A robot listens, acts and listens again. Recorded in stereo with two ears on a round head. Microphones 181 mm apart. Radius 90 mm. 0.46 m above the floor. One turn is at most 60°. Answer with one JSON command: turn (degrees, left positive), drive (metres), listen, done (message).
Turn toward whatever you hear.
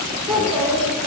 {"turn": 30}
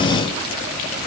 {"listen": true}
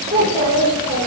{"turn": -20}
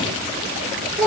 {"done": "Found it: a child speaking, straight ahead, over 4 m away."}